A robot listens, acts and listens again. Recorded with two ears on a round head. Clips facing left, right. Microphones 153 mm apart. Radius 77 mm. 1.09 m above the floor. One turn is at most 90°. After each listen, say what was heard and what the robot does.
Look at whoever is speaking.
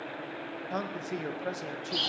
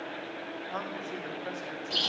The man speaking: about 40° left or 140° left. Turn 40° left.
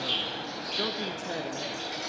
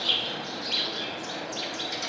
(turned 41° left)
Keep listening.
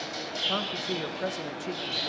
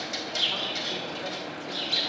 Keep listening.
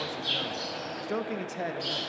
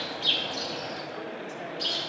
So it is at 90° left. Turn 90° left.
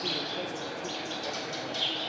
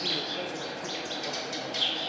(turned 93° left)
Keep listening.
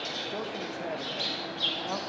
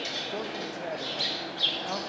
Keep listening.
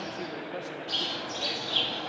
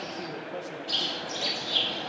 I heard a man speaking from this way, but can't make it out now.